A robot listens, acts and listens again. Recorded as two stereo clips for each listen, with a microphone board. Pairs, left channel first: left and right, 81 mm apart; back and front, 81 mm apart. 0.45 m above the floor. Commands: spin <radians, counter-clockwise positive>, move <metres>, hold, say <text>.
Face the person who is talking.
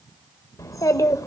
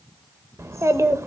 spin 0.87
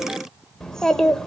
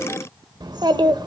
say Facing the child speaking.